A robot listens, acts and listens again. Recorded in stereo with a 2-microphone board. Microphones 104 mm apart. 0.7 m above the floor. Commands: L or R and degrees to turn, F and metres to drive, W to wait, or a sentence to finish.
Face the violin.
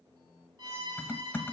R45
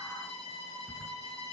R90
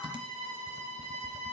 L10
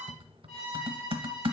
Facing the violin, over 4 m away.